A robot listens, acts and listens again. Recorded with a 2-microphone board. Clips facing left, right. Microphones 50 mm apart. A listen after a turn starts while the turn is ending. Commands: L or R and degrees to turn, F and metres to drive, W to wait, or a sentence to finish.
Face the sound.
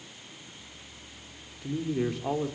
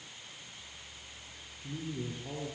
L90
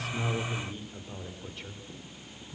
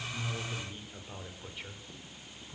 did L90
R10
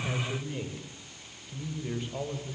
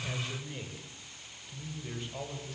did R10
Found it: a man speaking, straight ahead.